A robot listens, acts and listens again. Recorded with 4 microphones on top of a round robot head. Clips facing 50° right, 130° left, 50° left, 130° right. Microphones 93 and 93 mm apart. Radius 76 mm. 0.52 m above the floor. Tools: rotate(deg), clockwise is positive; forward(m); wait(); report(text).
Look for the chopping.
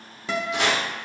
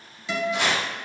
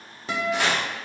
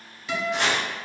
rotate(35)
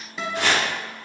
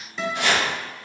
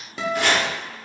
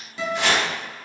report("Facing the chopping.")